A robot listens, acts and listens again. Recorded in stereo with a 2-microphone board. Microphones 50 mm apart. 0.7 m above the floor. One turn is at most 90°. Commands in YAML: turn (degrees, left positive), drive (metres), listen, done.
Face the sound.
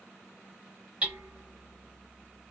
turn: -25
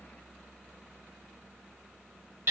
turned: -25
turn: -90
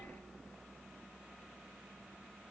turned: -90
turn: -40
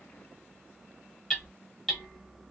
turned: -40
turn: 10
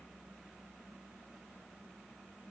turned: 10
listen: true
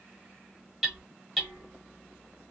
done: "Facing the hammering, 1 to 2 m away."